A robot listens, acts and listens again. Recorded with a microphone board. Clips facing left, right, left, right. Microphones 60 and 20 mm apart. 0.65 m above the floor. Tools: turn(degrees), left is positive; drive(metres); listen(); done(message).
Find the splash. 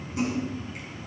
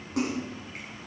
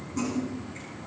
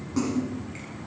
turn(degrees=-90)
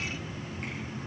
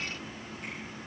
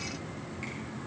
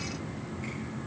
done("Facing where the splash came from. I can't hear it now.")